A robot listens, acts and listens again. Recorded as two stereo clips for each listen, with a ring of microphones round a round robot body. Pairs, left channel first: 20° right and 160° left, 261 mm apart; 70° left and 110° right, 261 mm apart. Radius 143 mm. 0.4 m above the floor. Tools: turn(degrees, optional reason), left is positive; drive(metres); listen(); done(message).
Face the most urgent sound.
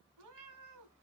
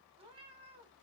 listen()
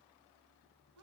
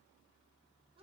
listen()
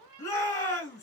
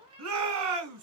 turn(degrees=-100, reason="The shout: 100° right.")
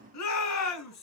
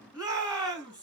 turn(degrees=-40, reason="The shout is now 40° right.")
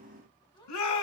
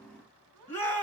turn(degrees=-15, reason="The shout is now 15° right.")
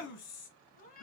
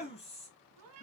done("Facing the shout, 2 to 4 m away.")